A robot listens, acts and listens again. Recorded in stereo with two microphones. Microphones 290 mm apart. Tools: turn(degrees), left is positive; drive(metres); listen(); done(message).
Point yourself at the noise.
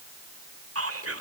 turn(degrees=-50)
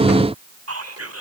turn(degrees=-70)
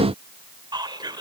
turn(degrees=-15)
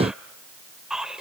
done("Facing the whispering.")